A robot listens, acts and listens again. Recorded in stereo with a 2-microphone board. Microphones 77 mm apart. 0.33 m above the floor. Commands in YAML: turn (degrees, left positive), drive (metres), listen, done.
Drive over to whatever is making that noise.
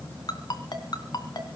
turn: 65
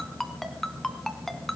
drive: 1.0
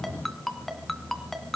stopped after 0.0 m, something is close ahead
done: "Something is in my way. I am facing the ringtone but have not reached it."